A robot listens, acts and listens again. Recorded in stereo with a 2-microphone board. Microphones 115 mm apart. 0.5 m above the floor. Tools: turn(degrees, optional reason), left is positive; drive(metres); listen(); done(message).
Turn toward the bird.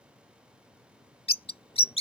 turn(degrees=55, reason="The bird: about 55° left or 125° left.")
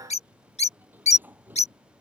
turn(degrees=70, reason="So it is at 70° left.")
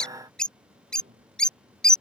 done("Facing the bird.")